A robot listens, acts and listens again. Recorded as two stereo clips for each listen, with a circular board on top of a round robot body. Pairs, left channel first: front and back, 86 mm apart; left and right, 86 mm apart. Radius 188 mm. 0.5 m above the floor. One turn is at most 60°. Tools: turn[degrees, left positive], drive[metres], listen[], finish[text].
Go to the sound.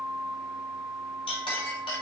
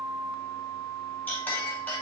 Thought: The clink: 15° left.
Action: turn[15]
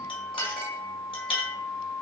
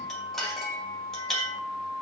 Action: drive[1.0]
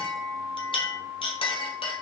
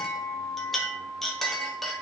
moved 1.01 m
Action: drive[1.0]
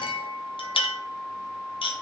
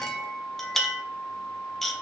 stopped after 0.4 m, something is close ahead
Action: finish[I am next to the clink.]